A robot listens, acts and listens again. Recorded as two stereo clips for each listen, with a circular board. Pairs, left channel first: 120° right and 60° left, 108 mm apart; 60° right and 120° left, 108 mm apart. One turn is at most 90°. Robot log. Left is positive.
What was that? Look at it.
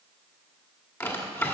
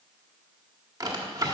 note: The drawer: 175° left.
cmd yaw +90
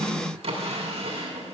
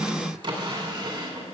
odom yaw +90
note: The drawer is now 85° left.
cmd yaw +85
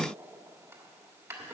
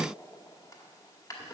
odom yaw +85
end: Found it: a drawer, straight ahead, 1 to 2 m away.